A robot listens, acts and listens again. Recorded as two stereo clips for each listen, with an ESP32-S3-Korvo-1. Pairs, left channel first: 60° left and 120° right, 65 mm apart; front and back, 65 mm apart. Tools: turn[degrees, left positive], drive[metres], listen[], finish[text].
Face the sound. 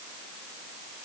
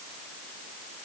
Action: listen[]
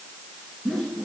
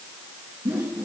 Thought: The whoosh: 145° left.
Action: turn[145]
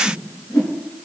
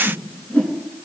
Thought: The whoosh is now 60° left.
Action: turn[60]
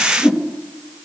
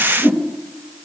Thought: The whoosh is now 10° right.
Action: turn[-10]
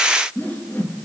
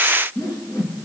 Action: finish[Found it: a whoosh, straight ahead, 2 to 4 m away.]